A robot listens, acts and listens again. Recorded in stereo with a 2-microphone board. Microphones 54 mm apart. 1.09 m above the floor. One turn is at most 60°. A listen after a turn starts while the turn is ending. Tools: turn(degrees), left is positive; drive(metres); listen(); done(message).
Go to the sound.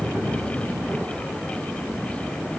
listen()
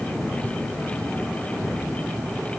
listen()
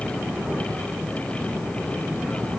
done("I can't make out anything to turn to.")